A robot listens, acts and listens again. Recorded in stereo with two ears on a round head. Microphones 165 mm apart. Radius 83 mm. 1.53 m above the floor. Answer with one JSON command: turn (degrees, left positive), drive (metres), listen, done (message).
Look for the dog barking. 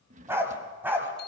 {"turn": -30}
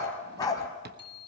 {"turn": 20}
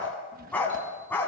{"turn": 10}
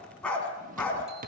{"done": "Facing the dog barking, 2 to 4 m away."}